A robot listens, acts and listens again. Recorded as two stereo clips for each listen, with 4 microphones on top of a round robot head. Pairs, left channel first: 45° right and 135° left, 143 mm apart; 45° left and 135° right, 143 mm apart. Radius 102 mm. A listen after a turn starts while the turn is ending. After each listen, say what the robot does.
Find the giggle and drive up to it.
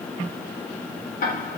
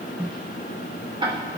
Keep listening.
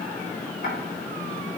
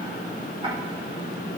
Keep listening.
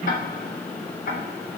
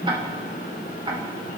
I can't make out a giggle, only ticking.